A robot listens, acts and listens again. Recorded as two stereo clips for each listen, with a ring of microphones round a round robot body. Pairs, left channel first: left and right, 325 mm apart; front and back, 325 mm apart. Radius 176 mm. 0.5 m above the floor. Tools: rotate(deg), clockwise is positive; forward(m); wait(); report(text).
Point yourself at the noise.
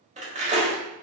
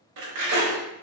rotate(155)
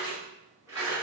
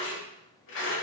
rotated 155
rotate(10)
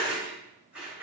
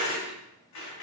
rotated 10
report("Facing the cutlery clinking.")